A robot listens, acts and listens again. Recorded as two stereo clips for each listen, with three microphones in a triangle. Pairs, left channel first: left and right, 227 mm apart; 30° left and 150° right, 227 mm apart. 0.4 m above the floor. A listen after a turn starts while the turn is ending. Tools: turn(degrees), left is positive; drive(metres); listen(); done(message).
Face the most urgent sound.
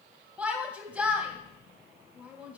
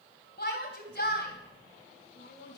done("Found it: a shout, straight ahead, 2 to 4 m away.")